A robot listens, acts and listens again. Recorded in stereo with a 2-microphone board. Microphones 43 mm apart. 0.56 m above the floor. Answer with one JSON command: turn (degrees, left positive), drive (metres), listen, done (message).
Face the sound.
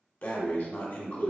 {"turn": 50}
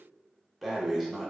{"done": "Found it: breathing, straight ahead, under 1 m away."}